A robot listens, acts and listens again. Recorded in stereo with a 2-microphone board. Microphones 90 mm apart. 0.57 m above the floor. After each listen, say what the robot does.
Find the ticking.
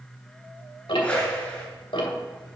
Turn 70° left.
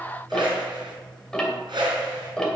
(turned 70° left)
Facing the ticking.